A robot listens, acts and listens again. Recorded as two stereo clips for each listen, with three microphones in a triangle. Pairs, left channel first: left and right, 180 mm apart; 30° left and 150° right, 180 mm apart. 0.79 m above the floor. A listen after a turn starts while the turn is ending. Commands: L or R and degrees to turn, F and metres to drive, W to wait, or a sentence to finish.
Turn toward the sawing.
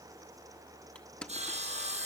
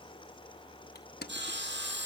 R140
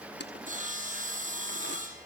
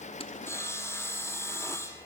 R45
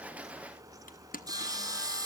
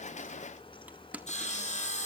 R20
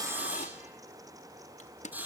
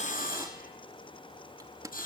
R10
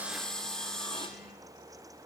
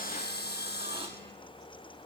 Found it: sawing, straight ahead.